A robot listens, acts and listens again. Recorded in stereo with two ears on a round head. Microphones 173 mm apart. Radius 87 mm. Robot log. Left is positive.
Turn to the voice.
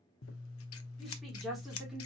cmd yaw +30
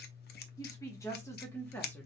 cmd yaw +30
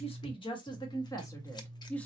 cmd yaw +30
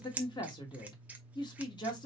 note: So it is at 155° left.
cmd yaw +155
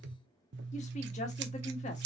note: The woman speaking is now 35° left.
cmd yaw +35
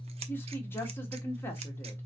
note: The woman speaking is now 10° left.
cmd yaw +10
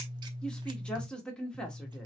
end: Facing the woman speaking, 1 to 2 m away.